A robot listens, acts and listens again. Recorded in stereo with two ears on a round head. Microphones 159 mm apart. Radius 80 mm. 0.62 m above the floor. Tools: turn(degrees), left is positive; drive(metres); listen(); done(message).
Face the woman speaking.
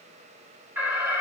listen()
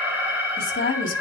turn(degrees=50)
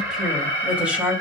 turn(degrees=-10)
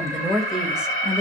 done("Found it: a woman speaking, straight ahead, 2 to 4 m away.")